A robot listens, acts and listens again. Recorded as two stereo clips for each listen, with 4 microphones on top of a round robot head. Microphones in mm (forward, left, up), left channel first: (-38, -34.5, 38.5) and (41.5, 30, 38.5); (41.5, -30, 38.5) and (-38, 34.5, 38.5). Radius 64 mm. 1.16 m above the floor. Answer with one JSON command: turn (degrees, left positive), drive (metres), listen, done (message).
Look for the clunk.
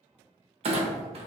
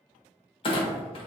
{"done": "Found it: a clunk, straight ahead, under 1 m away."}